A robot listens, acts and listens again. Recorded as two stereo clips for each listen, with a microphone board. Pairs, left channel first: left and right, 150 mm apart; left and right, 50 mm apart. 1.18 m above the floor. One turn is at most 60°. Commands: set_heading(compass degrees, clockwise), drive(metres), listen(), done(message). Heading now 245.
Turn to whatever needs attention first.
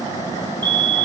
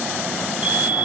set_heading(275)
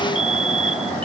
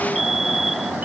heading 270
done("Facing the fire alarm.")